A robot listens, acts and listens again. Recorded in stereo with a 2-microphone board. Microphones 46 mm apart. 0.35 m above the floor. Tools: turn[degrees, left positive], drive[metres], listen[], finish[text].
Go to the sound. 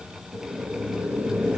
Thought: The boiling: about 45° right or 135° right.
Action: turn[-45]
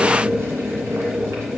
Thought: So it is at 90° right.
Action: turn[-90]
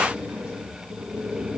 Thought: The boiling is now 25° right.
Action: turn[-25]
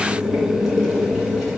Action: drive[1.0]
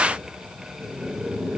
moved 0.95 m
Action: drive[1.0]
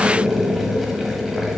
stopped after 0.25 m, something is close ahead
Action: finish[Arrived at the boiling, straight ahead.]